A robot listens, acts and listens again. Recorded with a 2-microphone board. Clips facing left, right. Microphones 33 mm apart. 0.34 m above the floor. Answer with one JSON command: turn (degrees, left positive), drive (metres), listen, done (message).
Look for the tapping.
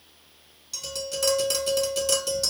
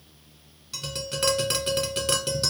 {"turn": -35}
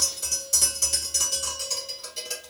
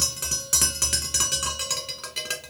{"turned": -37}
{"turn": -105}
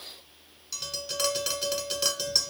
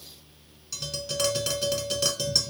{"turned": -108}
{"done": "Found it: tapping, straight ahead, under 1 m away."}